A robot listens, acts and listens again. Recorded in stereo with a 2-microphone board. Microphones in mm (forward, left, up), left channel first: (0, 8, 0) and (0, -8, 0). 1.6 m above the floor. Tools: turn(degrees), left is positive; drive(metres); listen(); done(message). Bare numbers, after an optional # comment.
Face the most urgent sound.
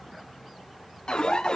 # The alarm: about 65° left or 115° left.
turn(65)
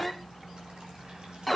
done("Found it: an alarm, straight ahead.")